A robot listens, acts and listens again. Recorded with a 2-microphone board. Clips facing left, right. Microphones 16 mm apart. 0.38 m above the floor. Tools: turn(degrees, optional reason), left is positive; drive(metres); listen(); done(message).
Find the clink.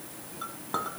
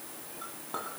turn(degrees=35, reason="The clink: about 35° left or 145° left.")
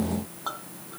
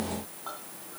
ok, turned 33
turn(degrees=110, reason="So it is at 110° left.")
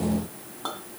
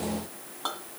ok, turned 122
turn(degrees=-10, reason="The clink is now 10° right.")
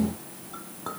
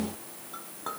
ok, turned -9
done("Facing the clink.")